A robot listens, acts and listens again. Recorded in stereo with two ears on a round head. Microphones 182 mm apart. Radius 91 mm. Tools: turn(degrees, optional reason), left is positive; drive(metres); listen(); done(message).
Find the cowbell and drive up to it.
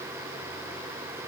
listen()
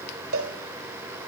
turn(degrees=-70, reason="The cowbell: about 70° right or 110° right.")
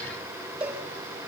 drive(metres=1.0)
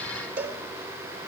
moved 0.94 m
turn(degrees=-10, reason="The cowbell is now 10° right.")
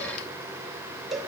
drive(metres=1.0)
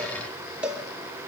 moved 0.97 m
drive(metres=1.0)
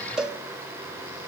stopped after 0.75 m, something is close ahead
done("I am next to the cowbell.")